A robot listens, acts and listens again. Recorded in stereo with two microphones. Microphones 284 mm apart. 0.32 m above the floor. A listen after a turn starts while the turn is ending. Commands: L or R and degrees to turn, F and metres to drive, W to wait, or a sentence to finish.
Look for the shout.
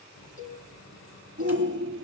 R40
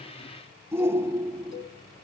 R10
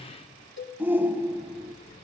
R10
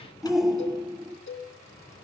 Facing the shout.